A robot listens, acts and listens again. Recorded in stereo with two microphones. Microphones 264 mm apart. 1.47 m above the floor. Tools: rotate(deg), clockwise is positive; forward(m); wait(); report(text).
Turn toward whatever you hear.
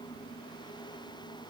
wait()
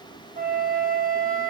rotate(35)
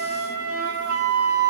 rotate(110)
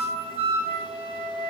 rotate(25)
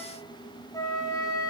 rotate(-15)
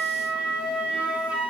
report("Found it: a flute, straight ahead, under 1 m away.")